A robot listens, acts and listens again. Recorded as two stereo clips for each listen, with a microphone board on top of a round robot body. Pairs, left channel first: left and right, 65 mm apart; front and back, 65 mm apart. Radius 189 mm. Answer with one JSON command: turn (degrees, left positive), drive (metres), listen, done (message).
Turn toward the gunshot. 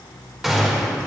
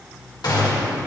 {"done": "Facing the gunshot."}